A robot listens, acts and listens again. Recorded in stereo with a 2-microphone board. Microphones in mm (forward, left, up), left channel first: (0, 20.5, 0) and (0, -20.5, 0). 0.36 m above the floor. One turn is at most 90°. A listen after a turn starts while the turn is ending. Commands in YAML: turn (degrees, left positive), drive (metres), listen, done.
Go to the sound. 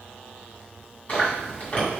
turn: 35
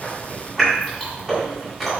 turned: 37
drive: 1.0
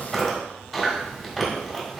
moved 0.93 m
drive: 1.0
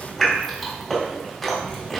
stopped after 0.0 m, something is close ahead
done: "Arrived at the chewing, straight ahead."